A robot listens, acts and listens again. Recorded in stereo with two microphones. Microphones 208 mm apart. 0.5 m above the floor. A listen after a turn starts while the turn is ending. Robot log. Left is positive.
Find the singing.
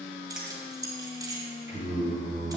note: The singing: about 70° right or 110° right.
cmd yaw -70
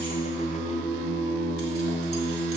note: So it is at 10° left.
cmd yaw +10
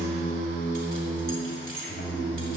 end: Facing the singing, over 4 m away.